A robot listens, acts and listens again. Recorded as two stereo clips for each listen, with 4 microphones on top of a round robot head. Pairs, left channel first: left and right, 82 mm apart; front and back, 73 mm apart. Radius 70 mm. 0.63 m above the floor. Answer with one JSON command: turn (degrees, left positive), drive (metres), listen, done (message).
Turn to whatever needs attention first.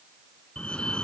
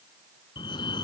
{"turn": 10}
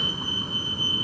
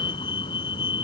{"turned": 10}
{"done": "Found it: a fire alarm, straight ahead."}